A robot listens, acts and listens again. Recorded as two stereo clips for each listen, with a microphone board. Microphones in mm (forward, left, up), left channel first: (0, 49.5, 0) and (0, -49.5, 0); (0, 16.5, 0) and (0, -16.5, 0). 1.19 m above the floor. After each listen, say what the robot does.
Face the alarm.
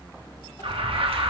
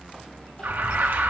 Turn 65° right.
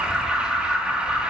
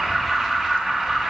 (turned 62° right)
Turn 10° right.
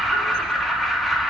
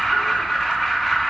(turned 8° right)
Facing the alarm, 1 to 2 m away.